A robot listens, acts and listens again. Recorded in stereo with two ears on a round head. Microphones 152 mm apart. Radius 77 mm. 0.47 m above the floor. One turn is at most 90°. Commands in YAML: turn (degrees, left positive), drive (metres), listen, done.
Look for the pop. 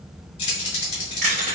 listen: true
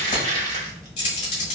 listen: true
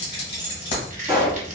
turn: -30
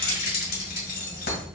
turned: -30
listen: true
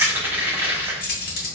done: "I heard a pop, but can't make it out now. It was about 25° left or 145° right."